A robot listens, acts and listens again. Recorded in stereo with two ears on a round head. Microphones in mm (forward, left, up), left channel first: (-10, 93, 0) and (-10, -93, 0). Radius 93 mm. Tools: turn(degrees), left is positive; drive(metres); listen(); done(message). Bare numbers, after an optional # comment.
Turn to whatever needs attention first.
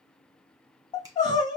# The crying: about 20° left or 160° left.
turn(20)
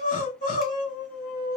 # So it is at 140° left.
turn(140)
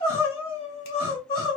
# The crying is now 25° left.
turn(25)
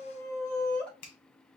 done("Found it: crying, straight ahead.")